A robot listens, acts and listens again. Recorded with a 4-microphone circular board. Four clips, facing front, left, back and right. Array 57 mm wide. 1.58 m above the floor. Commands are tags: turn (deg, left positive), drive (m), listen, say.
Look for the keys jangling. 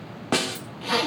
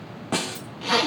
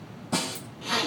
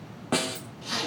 <turn deg="-65"/>
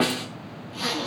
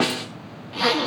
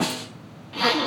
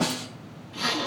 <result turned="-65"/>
<listen/>
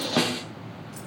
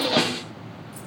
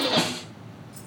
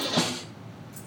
<turn deg="20"/>
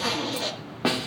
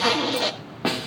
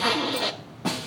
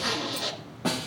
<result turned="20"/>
<listen/>
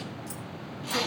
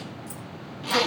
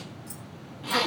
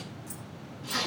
<turn deg="10"/>
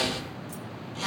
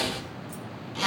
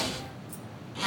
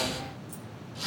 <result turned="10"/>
<listen/>
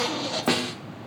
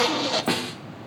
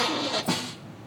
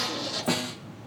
<listen/>
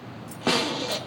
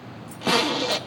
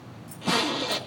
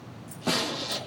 <say>Facing where the keys jangling came from. I can't hear it now.</say>